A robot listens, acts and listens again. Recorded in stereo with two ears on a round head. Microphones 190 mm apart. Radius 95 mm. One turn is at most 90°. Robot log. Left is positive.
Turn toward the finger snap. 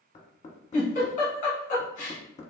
cmd idle
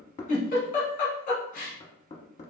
cmd idle
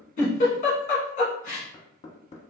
end: I can't make out a finger snap to turn to.